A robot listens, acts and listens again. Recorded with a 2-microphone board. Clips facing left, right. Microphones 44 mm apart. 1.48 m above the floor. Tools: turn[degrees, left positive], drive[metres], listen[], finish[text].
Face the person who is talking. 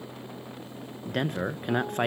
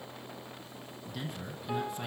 Thought: The man speaking: about 55° left or 125° left.
Action: turn[55]
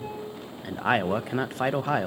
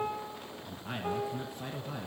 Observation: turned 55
Thought: So it is at 70° left.
Action: turn[70]
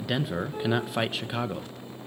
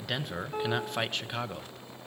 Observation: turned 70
Action: finish[Facing the man speaking.]